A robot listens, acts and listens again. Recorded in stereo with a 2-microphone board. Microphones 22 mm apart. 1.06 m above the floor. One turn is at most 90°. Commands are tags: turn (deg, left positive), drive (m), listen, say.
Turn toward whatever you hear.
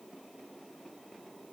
<listen/>
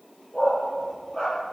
<turn deg="35"/>
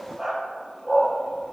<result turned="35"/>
<say>Facing the dog barking, over 4 m away.</say>